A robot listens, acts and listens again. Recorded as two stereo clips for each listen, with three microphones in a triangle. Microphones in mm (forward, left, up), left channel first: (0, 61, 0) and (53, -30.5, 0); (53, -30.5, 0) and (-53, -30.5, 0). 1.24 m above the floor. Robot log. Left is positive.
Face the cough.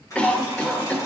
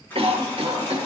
note: The cough: 160° right.
cmd yaw -160
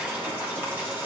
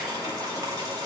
cmd idle
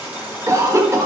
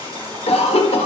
end: Found it: a cough, straight ahead, 1 to 2 m away.